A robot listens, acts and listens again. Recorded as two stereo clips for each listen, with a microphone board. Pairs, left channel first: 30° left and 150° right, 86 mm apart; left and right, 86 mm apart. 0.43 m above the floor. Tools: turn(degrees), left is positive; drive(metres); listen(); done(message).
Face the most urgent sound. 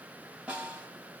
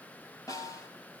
listen()
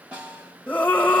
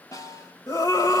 turn(degrees=105)
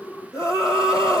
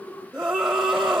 turn(degrees=-10)
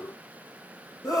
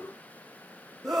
done("Facing the scream.")